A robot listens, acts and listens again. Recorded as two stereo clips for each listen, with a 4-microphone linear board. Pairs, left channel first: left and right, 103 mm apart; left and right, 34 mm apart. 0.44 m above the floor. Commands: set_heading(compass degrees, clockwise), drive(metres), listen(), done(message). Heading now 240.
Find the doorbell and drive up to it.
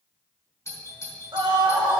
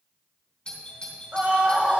set_heading(210)
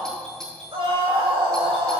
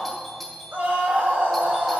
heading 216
drive(1.0)
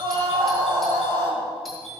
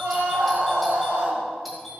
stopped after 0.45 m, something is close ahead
done("Blocked. The doorbell is further on, straight ahead.")